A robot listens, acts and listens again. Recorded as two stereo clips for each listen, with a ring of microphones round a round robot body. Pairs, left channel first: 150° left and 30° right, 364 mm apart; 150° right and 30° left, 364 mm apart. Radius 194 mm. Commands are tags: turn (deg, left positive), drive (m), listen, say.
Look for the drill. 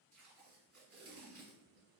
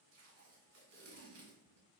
<listen/>
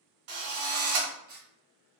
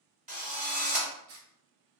<turn deg="-40"/>
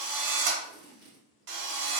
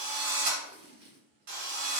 <say>Found it: a drill, straight ahead, 1 to 2 m away.</say>